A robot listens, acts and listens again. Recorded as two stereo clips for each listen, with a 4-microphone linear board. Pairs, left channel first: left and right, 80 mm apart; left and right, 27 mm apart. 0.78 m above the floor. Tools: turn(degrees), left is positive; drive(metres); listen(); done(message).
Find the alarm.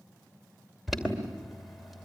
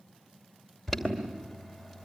turn(degrees=30)
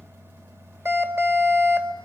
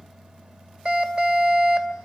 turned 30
turn(degrees=-35)
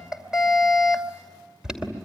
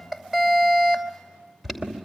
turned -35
turn(degrees=-10)
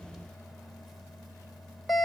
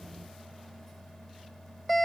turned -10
done("Facing the alarm, 2 to 4 m away.")